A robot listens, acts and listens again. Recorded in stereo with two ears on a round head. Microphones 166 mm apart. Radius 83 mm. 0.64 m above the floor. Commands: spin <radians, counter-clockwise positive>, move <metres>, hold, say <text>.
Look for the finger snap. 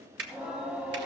spin -1.13
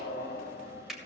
say Found it: a finger snap, straight ahead.